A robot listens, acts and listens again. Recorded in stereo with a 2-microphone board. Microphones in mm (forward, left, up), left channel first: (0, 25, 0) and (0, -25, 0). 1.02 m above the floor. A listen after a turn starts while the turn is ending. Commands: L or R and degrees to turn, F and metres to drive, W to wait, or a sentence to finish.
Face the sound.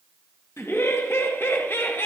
L50
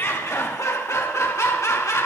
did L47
L80
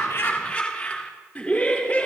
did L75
L25
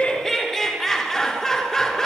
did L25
Found it: laughter, straight ahead.